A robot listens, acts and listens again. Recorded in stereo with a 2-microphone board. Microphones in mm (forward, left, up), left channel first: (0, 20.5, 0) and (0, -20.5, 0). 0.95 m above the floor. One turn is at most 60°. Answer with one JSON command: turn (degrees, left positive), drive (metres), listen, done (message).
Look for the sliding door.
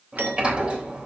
{"turn": -25}
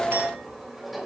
{"done": "Facing the sliding door, 2 to 4 m away."}